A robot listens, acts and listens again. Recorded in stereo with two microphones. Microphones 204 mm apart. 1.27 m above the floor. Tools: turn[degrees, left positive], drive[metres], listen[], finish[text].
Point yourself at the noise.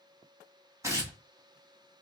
Action: turn[-30]
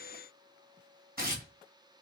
Thought: So it is at 135° right.
Action: turn[-135]
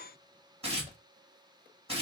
Thought: The tearing paper is now 30° right.
Action: turn[-30]
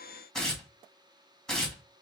Action: finish[Found it: tearing paper, straight ahead, 1 to 2 m away.]